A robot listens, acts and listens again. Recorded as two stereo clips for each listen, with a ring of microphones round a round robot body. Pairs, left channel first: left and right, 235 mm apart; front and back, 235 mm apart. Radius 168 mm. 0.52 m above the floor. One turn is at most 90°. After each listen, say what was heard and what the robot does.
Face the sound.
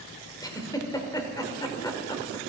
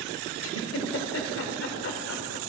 The giggle: 15° left. Turn 15° left.
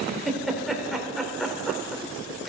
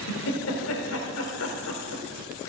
Facing the giggle, 1 to 2 m away.